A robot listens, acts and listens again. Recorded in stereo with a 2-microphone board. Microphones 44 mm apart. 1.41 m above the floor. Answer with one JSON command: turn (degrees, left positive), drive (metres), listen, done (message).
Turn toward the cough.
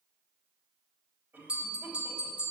{"turn": -60}
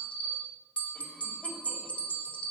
{"listen": true}
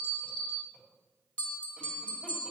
{"listen": true}
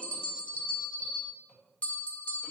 {"done": "I heard a cough, but can't make it out now. It was about straight ahead or 60° right."}